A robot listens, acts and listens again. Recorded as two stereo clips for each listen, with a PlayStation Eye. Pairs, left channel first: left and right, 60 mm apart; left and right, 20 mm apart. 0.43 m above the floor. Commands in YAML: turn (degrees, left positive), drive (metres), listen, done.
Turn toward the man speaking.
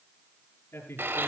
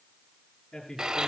turn: 40
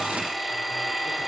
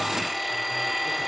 listen: true
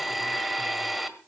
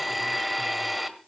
listen: true
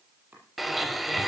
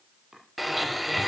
done: "I heard a man speaking, but can't make it out now. It was about straight ahead or 100° left."